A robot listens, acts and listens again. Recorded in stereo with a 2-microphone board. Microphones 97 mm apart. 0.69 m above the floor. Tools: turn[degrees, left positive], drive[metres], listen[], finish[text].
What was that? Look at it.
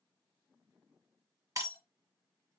Thought: The breaking glass: about 35° right or 145° right.
Action: turn[-35]
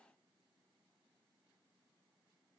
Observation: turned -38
Action: listen[]
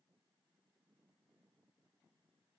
Action: finish[I heard breaking glass, but can't make it out now. It was about straight ahead or 105° right.]